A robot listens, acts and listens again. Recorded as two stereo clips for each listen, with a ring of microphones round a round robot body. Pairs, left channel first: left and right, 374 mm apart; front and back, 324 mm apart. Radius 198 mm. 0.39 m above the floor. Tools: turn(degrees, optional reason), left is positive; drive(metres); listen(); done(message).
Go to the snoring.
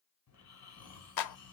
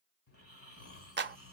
turn(degrees=45, reason="The snoring: 45° left.")
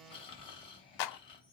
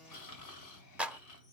turn(degrees=15, reason="The snoring is now 15° left.")
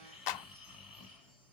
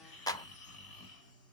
drive(metres=1.0)
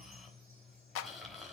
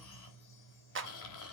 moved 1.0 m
drive(metres=1.0)
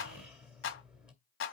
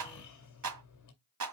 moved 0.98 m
drive(metres=1.0)
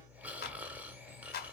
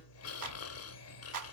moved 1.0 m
drive(metres=1.0)
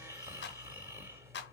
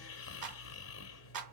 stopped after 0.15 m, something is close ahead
turn(degrees=-10, reason="The snoring is now 10° right.")
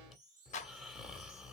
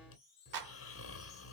done("I am next to the snoring.")